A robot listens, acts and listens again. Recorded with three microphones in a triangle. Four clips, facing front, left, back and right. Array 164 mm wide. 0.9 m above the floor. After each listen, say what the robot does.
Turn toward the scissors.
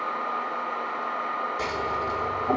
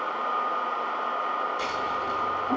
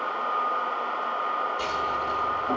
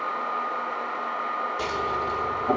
Turn 80° right.
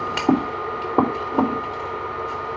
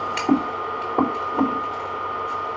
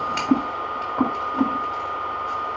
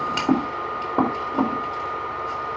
Turn 10° right.
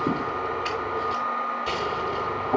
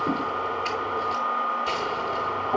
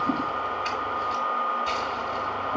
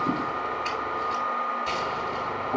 Facing the scissors, 2 to 4 m away.